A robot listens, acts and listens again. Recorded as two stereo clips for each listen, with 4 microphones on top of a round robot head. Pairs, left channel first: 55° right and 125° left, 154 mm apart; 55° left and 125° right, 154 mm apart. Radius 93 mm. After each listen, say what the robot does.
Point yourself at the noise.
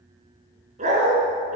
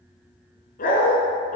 Turn 90° left.
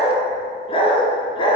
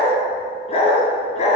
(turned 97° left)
Found it: a dog barking, straight ahead, 2 to 4 m away.